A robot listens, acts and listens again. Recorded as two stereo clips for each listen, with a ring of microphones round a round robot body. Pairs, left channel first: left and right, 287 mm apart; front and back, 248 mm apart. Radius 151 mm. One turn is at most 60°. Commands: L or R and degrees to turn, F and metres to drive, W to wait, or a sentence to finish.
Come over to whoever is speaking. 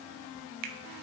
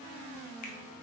W
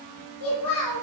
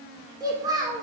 L60
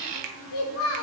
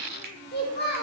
L50
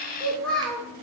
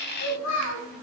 F1.0
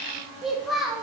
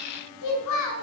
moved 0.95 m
F1.0
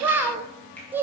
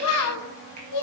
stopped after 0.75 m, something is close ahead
I am next to the child speaking.